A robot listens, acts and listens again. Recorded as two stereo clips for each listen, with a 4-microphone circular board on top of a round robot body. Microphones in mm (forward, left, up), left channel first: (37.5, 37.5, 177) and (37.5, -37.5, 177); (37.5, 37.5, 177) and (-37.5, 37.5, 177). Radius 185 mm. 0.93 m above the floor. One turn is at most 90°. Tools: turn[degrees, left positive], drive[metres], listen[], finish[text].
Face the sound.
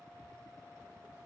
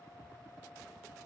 Action: listen[]
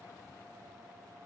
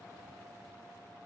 Action: listen[]
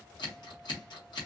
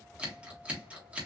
Thought: The scissors: 105° left.
Action: turn[90]
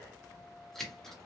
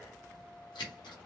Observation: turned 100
Action: finish[Facing the scissors.]